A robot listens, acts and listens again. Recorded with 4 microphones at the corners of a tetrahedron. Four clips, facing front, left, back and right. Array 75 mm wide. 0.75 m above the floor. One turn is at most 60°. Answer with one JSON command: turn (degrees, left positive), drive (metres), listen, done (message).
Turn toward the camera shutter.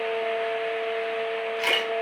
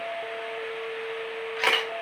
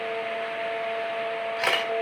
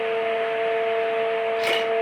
{"turn": 60}
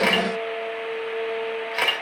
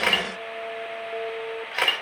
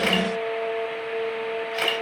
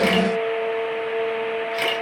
{"turn": 50}
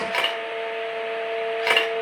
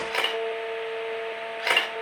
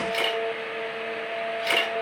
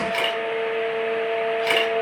{"turn": 20}
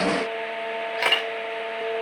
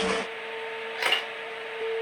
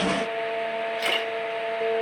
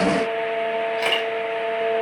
{"done": "Facing the camera shutter."}